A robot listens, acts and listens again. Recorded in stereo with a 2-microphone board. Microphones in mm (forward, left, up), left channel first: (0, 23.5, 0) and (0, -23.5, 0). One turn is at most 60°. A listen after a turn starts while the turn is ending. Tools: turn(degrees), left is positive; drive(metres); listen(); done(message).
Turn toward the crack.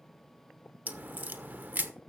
turn(degrees=-35)
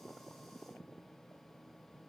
listen()
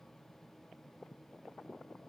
done("I heard a crack, but can't make it out now. It was about straight ahead or 110° right.")